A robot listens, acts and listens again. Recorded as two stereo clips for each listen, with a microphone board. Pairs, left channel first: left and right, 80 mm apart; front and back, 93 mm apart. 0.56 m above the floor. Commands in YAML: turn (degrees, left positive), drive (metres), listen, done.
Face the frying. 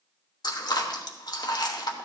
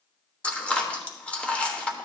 listen: true
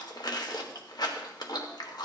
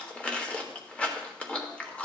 listen: true
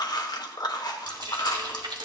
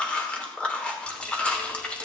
turn: -80
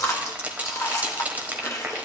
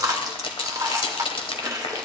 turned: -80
turn: -20
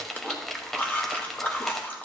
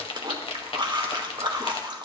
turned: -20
done: "Facing the frying."